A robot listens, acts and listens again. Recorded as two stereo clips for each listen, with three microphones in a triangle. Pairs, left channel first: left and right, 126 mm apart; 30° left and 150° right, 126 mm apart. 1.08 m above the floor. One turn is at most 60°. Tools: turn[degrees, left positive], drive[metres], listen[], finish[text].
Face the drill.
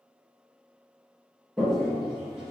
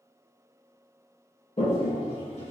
Action: listen[]
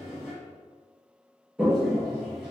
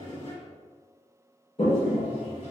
Action: listen[]
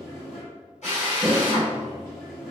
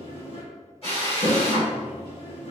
Thought: The drill: 70° left.
Action: turn[60]
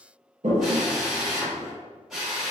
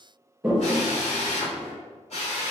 Action: finish[Facing the drill.]